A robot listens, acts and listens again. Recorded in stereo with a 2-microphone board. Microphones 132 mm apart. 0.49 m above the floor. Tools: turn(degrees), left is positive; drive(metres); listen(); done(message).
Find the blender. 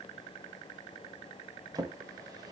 listen()
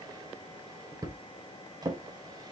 listen()
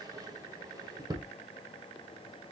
done("I can't make out a blender, only a drawer.")